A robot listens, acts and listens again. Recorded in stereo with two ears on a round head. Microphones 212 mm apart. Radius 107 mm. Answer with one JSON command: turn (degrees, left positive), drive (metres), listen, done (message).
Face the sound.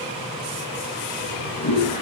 {"turn": 90}
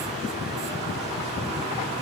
{"listen": true}
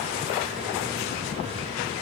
{"listen": true}
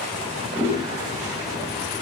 {"turn": -15}
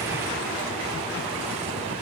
{"listen": true}
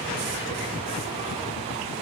{"listen": true}
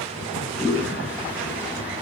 {"done": "Found it: a toilet flushing, straight ahead, 2 to 4 m away."}